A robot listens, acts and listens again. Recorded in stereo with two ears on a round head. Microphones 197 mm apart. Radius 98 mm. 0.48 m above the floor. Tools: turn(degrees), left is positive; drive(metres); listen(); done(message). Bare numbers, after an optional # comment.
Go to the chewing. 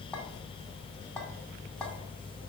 listen()
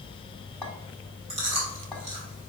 # The chewing: about 30° right or 150° right.
turn(-30)
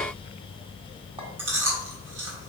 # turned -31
# So it is at 115° right.
turn(-115)
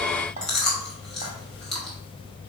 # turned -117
drive(1.0)
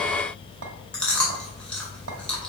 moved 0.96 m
drive(1.0)
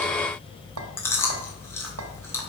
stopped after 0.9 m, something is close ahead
# The chewing is now 20° left.
turn(20)
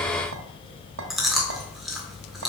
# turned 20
done("Arrived at the chewing, straight ahead.")